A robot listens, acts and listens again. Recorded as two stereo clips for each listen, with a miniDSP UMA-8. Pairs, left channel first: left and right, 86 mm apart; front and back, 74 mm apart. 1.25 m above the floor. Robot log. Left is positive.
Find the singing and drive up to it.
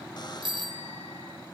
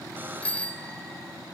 cmd idle
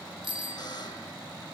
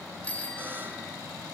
cmd idle
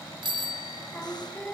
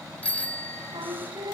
note: The singing: 165° left.
cmd yaw +165
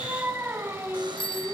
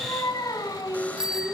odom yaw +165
note: The singing is now 25° right.
cmd yaw -25
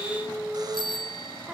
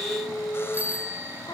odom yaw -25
note: The singing is now 10° right.
cmd yaw -10
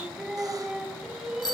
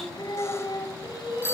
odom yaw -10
cmd fwd 1.0
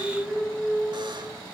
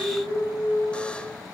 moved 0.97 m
note: The singing is now 10° right.
cmd yaw -10
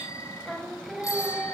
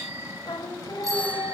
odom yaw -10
cmd fwd 1.0
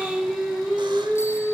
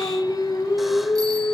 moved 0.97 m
cmd fwd 1.0
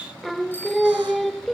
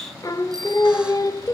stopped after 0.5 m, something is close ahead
end: I am next to the singing.